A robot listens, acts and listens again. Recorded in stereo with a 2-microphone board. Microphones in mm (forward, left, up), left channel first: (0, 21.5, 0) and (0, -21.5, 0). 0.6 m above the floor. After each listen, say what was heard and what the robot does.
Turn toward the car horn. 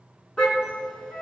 Turn 30° left.
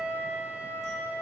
Keep listening.
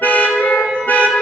So it is at 135° left. Turn 135° left.
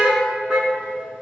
The car horn is now 15° right. Turn 15° right.
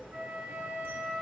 Keep listening.
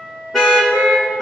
Found it: a car horn, straight ahead.